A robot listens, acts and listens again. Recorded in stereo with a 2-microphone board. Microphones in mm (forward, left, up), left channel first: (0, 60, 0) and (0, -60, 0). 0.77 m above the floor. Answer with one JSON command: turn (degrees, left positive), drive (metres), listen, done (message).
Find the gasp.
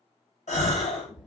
{"turn": 90}
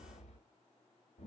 {"done": "I heard a gasp from this way, but can't make it out now."}